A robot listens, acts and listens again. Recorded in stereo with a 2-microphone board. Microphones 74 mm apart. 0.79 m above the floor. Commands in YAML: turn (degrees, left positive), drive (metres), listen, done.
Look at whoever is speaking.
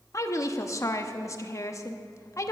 turn: 40
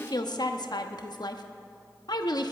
turn: 90
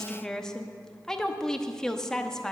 turn: 10
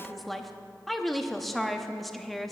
done: "Facing the woman speaking, under 1 m away."